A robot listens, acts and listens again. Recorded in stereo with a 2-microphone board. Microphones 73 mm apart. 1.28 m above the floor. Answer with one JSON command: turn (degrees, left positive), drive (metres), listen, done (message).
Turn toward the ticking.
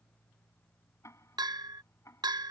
{"turn": 40}
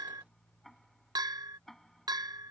{"done": "Found it: ticking, straight ahead."}